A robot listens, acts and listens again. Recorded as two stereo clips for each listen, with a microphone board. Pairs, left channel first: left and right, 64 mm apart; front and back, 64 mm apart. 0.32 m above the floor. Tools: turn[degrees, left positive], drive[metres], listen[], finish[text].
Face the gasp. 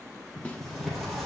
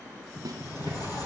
Action: listen[]
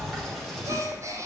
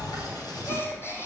Thought: The gasp: 50° right.
Action: turn[-50]
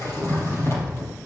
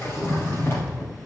Action: finish[I heard a gasp from this way, but can't make it out now.]